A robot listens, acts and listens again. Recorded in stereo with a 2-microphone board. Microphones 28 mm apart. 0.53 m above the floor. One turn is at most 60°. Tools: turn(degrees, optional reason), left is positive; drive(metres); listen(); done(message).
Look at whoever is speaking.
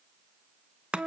listen()
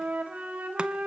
listen()
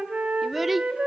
turn(degrees=-30)
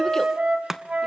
listen()
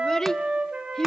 turn(degrees=25, reason="So it is at 25° left.")
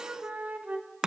listen()
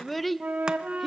done("Facing the child speaking.")